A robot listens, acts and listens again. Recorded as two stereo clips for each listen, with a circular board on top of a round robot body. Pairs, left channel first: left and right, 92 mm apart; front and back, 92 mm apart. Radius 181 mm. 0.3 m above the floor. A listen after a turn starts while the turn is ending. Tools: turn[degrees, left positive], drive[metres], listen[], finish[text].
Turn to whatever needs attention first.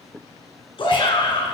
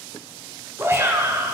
Thought: The shout: 120° left.
Action: turn[120]
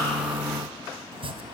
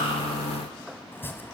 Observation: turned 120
Action: listen[]
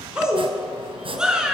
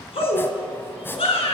Thought: The shout is now 10° right.
Action: turn[-10]
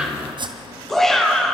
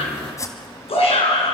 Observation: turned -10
Action: finish[Facing the shout, over 4 m away.]